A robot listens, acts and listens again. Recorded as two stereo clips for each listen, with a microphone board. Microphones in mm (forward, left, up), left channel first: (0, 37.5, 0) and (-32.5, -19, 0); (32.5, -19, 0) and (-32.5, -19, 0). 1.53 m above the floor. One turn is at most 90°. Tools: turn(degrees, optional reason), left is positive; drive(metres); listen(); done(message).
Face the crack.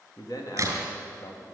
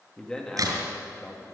turn(degrees=-90, reason="The crack: 160° right.")
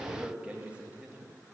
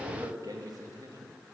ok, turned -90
turn(degrees=-70, reason="Nothing new. It was at 70° right.")
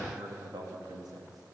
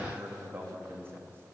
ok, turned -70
done("I heard a crack from this way, but can't make it out now.")